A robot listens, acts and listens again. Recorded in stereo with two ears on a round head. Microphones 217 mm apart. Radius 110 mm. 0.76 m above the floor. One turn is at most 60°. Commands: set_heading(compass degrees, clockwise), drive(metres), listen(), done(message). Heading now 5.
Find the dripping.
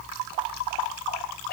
listen()
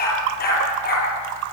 listen()
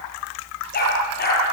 done("I can't make out dripping, only a dog barking.")